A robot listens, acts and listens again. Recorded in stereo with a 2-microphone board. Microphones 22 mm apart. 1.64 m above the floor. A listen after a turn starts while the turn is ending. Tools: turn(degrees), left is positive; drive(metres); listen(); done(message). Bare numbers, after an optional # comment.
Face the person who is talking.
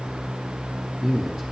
# The man speaking: about 25° right or 155° right.
turn(-25)
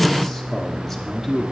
done("Found it: a man speaking, straight ahead.")